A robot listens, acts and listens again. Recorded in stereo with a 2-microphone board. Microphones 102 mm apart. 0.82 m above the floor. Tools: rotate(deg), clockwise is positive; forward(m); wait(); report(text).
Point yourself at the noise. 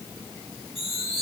rotate(-60)
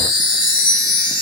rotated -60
rotate(-50)
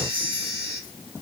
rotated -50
rotate(-30)
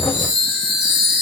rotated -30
report("Found it: a chime, straight ahead, 1 to 2 m away.")